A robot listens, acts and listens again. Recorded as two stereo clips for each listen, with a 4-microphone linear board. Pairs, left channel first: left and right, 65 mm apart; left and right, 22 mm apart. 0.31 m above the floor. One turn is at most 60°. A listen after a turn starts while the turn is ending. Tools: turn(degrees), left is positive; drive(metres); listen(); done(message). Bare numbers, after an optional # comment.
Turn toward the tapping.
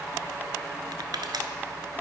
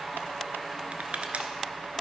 listen()
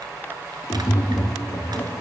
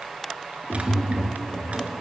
# The tapping: about 70° left or 110° left.
turn(60)
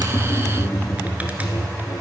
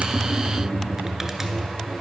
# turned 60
# So it is at 50° left.
turn(50)
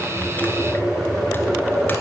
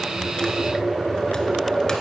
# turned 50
done("Found it: tapping, straight ahead, 1 to 2 m away.")